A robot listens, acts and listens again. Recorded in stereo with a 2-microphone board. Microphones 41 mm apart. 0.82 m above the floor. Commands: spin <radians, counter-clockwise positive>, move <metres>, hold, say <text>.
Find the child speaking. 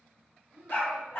spin -1.22
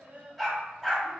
spin -1.05
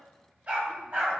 hold
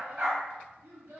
spin -1.31
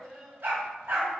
spin -0.17
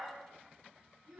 say Facing the child speaking, 1 to 2 m away.